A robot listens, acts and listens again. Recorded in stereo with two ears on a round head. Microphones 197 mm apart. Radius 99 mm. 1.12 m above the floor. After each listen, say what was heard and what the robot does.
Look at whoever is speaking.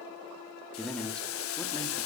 Turn 30° left.
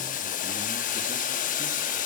Keep listening.
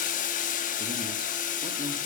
Keep listening.
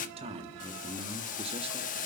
So it is at 25° right. Turn 25° right.
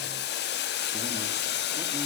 Keep listening.
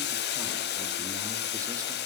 Keep listening.
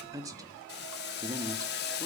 The man speaking is now 15° right. Turn 15° right.
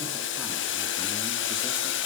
Keep listening.
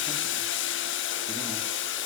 Keep listening.
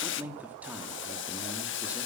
Found it: a man speaking, straight ahead.